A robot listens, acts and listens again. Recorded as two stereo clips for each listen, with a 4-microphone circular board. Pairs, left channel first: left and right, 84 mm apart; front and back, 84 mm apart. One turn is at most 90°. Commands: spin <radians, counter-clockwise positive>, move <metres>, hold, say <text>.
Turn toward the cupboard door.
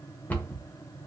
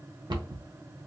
spin 1.57
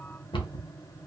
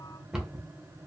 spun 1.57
spin 1.57
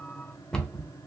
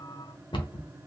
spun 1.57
spin 0.17
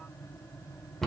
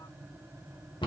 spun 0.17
say Facing the cupboard door, under 1 m away.